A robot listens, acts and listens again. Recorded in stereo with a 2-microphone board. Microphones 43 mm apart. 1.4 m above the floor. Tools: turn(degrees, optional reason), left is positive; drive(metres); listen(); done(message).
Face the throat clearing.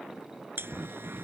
turn(degrees=-60, reason="The throat clearing: about 60° right or 120° right.")
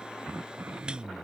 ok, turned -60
turn(degrees=-60, reason="So it is at 60° right.")
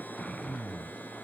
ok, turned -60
turn(degrees=15, reason="The throat clearing is now 15° left.")
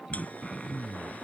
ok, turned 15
done("Found it: throat clearing, straight ahead.")